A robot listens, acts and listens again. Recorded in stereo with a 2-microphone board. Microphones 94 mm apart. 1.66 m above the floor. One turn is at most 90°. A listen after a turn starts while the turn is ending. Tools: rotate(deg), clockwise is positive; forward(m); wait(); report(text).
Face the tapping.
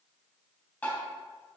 rotate(-20)
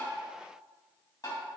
rotate(-90)
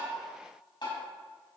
rotate(-55)
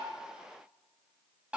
rotate(15)
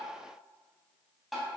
report("Facing the tapping, 2 to 4 m away.")